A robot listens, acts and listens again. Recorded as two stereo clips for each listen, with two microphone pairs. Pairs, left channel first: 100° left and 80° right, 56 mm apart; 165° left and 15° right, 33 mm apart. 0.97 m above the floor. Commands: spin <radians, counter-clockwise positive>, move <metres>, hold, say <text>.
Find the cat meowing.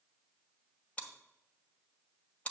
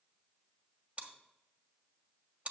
hold
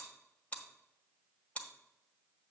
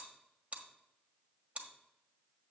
hold
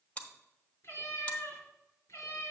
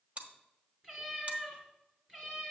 spin 1.13
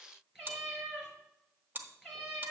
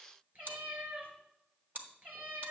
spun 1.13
say Facing the cat meowing, 2 to 4 m away.